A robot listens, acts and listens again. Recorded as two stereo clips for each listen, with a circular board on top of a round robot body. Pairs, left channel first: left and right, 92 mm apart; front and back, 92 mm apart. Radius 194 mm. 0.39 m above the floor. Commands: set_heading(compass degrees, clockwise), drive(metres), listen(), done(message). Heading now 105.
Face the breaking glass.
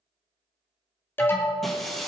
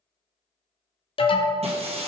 set_heading(290)
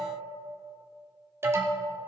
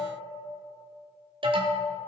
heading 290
done("I heard breaking glass from this way, but can't make it out now.")